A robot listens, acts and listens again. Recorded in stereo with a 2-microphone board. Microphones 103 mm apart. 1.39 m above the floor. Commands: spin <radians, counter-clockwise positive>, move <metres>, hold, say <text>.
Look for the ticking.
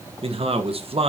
hold
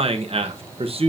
hold
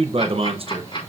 spin 0.87
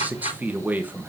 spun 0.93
spin 1.31
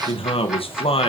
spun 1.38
say Found it: ticking, straight ahead, over 4 m away.